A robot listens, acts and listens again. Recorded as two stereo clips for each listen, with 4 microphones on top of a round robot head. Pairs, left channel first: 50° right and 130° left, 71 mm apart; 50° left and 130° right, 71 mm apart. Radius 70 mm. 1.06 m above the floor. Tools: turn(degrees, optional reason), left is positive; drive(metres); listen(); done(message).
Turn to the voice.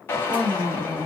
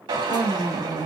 turn(degrees=75, reason="The woman speaking: 75° left.")
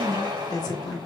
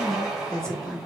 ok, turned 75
turn(degrees=-25, reason="The woman speaking is now 25° right.")
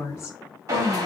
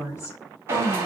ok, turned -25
done("Facing the woman speaking.")